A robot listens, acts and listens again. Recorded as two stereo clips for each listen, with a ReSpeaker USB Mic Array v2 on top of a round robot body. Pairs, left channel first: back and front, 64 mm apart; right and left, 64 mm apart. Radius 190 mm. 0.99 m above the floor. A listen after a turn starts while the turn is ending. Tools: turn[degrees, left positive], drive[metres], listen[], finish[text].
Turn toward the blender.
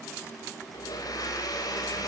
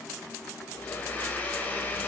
Thought: The blender: 155° right.
Action: turn[-155]
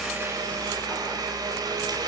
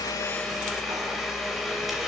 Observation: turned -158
Action: finish[Facing the blender.]